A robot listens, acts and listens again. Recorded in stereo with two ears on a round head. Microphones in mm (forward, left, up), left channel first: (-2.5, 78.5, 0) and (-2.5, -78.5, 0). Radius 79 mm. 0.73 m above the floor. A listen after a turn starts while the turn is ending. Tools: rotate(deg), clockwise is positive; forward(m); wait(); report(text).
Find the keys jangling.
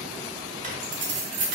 rotate(75)
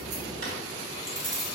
rotate(20)
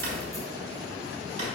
wait()
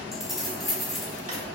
report("Facing the keys jangling.")